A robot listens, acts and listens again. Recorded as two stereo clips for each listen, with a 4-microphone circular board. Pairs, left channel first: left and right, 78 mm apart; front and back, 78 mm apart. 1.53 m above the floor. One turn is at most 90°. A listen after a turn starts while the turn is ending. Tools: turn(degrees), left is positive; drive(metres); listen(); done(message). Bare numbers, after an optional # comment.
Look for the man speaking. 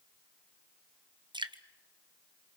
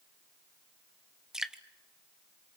listen()
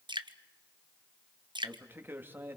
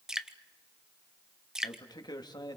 # The man speaking: 30° right.
turn(-30)
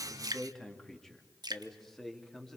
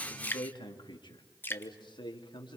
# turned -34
done("Facing the man speaking.")